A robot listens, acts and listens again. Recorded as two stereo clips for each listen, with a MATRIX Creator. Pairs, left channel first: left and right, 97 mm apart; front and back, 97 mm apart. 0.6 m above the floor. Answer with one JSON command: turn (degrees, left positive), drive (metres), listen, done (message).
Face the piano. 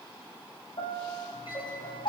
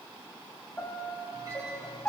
{"turn": 75}
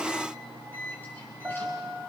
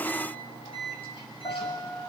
{"turn": -25}
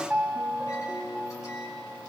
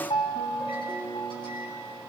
{"turn": -10}
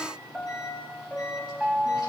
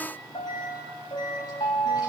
{"done": "Facing the piano."}